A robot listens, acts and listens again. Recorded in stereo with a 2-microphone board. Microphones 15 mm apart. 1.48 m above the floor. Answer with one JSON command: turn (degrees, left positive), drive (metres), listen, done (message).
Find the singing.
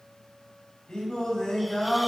{"turn": 65}
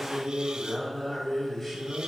{"done": "Found it: singing, straight ahead, over 4 m away."}